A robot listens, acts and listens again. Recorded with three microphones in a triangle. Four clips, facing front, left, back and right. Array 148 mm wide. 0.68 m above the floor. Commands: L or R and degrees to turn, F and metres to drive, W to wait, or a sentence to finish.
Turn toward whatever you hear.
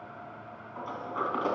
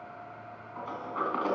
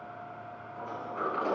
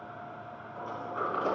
L50
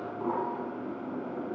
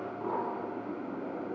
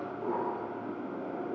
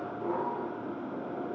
L15
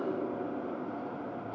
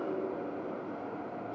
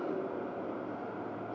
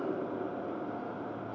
Facing the sliding door.